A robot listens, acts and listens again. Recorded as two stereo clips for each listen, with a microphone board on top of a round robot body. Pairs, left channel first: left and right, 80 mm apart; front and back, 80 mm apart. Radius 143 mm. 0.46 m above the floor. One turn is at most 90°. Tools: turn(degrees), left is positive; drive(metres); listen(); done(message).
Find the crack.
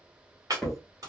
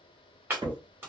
turn(degrees=-90)
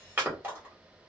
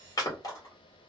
turn(degrees=-85)
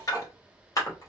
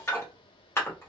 done("I heard a crack from this way, but can't make it out now.")